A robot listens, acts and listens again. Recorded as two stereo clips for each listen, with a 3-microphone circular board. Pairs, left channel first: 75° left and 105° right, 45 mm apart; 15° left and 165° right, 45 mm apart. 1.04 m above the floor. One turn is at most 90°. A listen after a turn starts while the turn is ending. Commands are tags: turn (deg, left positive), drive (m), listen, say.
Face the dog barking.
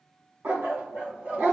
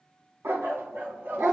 <turn deg="-90"/>
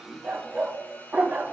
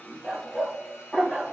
<turn deg="-60"/>
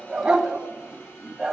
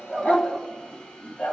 <turn deg="-35"/>
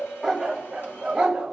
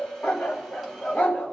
<turn deg="-30"/>
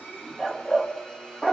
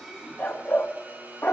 <say>Found it: a dog barking, straight ahead.</say>